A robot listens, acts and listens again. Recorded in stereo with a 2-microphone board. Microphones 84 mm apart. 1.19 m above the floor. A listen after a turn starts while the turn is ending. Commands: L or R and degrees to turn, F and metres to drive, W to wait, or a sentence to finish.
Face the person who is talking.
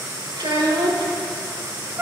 R70
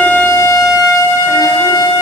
W
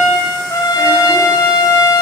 W
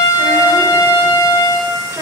I heard a child speaking, but can't make it out now. It was about straight ahead or 40° right.